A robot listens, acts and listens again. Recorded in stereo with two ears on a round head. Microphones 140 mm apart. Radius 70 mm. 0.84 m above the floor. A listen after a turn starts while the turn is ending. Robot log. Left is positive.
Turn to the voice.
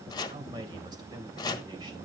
note: The man speaking: about 25° right or 155° right.
cmd yaw -25
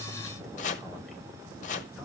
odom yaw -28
cmd idle
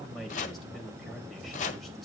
end: Found it: a man speaking, straight ahead.